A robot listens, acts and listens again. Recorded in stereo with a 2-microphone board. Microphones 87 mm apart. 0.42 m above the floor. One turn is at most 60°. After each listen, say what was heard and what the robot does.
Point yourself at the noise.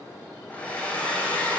The hair dryer: about 15° left or 165° left. Turn 15° left.
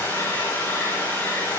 So it is at 150° left. Turn 60° left.
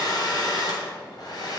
The hair dryer is now 70° left. Turn 60° left.
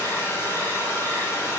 The hair dryer is now 35° left. Turn 35° left.
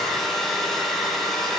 Facing the hair dryer, 2 to 4 m away.